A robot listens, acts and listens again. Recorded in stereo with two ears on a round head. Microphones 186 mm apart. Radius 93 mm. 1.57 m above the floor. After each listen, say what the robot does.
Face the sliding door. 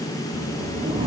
Turn 30° right.
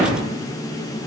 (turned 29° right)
Turn 120° right.
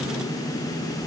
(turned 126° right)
Keep listening.
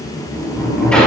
Found it: a sliding door, straight ahead, over 4 m away.